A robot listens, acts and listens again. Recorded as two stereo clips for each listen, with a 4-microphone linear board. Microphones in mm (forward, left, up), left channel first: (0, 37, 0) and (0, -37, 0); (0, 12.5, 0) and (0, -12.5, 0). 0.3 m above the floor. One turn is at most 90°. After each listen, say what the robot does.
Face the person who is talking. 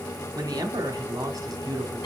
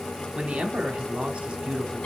Turn 55° right.
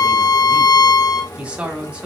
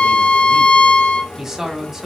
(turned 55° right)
Turn 15° right.
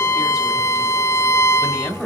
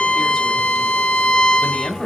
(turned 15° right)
Facing the man speaking, 1 to 2 m away.